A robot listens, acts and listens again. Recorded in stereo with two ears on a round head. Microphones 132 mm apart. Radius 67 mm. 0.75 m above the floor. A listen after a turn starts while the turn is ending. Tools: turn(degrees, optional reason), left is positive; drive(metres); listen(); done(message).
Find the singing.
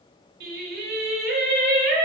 turn(degrees=-60, reason="The singing: about 60° right or 120° right.")
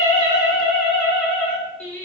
turn(degrees=10, reason="So it is at 10° left.")
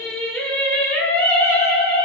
turn(degrees=25, reason="The singing is now 25° left.")
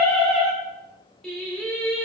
done("Found it: singing, straight ahead, 1 to 2 m away.")